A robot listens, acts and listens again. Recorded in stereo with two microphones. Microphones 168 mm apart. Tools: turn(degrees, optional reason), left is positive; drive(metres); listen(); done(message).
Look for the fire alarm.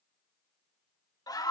listen()
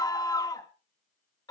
listen()
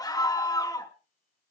done("I can't make out a fire alarm, only a scream.")